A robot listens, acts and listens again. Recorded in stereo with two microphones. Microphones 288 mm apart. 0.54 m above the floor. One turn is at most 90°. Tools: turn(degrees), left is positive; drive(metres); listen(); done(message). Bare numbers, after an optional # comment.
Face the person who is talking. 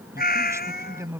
turn(-30)
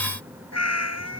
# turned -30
# So it is at 20° left.
turn(20)
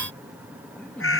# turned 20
done("Found it: a man speaking, straight ahead.")